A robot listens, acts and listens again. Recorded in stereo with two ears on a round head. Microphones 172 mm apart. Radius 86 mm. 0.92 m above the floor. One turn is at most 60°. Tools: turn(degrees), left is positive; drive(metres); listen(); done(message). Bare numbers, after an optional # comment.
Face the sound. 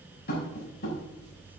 # The tapping: about 55° left or 125° left.
turn(55)
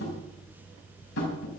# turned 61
# So it is at 65° left.
turn(60)
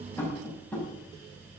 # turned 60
# The tapping is now 10° left.
turn(10)
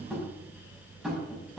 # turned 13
done("Found it: tapping, straight ahead.")